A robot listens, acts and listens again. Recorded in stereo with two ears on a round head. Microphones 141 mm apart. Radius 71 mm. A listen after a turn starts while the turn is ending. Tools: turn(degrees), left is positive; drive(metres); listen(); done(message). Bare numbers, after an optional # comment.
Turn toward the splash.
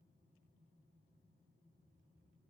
listen()
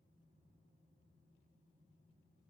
listen()
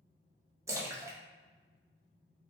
# The splash: about 20° right or 160° right.
turn(-20)
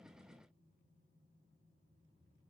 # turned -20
listen()
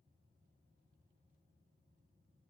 done("I heard a splash, but can't make it out now. It was about straight ahead or 140° right.")